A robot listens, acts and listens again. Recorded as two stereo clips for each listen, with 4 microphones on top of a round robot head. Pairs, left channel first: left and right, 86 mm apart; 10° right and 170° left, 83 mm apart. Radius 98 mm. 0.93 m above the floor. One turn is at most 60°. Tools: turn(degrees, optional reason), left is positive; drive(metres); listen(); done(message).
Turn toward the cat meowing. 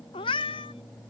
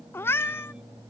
turn(degrees=55, reason="The cat meowing: 55° left.")
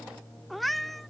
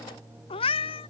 done("Facing the cat meowing.")